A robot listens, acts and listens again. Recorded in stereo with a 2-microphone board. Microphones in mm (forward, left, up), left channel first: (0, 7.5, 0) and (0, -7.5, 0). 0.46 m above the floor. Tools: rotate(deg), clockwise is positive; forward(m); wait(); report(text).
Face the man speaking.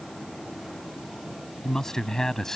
rotate(-45)
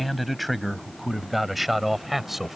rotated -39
rotate(10)
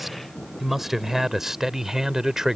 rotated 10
rotate(35)
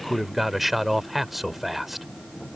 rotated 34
report("Found it: a man speaking, straight ahead.")